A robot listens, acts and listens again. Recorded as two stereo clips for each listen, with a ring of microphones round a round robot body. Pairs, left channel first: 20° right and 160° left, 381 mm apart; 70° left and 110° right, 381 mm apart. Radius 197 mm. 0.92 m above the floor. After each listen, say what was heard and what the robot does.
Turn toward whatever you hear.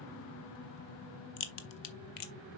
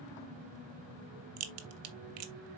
The crack: 60° right. Turn 60° right.
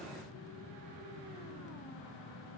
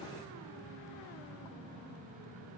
I heard a crack from this way, but can't make it out now.